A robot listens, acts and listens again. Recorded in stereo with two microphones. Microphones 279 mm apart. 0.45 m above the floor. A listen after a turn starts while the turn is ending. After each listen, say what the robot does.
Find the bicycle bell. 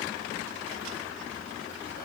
Keep listening.
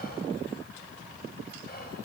Keep listening.
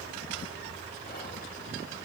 I can't make out a bicycle bell to turn to.